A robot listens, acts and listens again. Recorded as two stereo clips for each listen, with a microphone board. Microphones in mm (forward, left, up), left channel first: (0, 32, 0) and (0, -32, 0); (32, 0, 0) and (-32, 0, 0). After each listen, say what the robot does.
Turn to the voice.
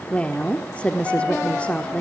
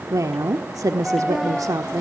Turn 155° left.
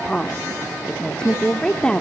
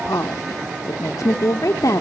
Turn 15° left.
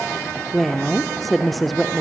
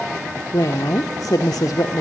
Facing the woman speaking, 1 to 2 m away.